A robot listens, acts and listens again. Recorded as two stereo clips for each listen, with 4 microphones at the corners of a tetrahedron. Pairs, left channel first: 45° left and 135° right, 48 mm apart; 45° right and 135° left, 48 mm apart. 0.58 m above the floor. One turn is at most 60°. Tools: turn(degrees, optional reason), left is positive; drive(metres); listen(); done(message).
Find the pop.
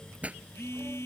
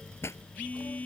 turn(degrees=-60, reason="The pop: 70° right.")
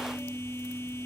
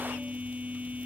turn(degrees=-10, reason="Nothing new. It was at 10° right.")
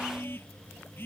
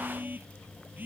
done("Facing where the pop came from. I can't hear it now.")